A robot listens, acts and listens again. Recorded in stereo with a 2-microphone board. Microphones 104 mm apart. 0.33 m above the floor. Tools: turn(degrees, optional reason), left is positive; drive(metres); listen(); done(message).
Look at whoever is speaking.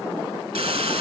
listen()
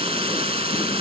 listen()
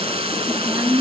turn(degrees=-45, reason="The woman speaking: about 45° right or 135° right.")
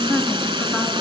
done("Facing the woman speaking, 2 to 4 m away.")